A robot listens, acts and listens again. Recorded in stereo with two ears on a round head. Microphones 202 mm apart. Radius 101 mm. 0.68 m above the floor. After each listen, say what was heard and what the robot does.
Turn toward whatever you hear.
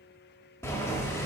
Turn 30° left.
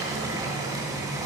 So it is at 20° right. Turn 20° right.
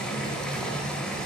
Found it: boiling, straight ahead.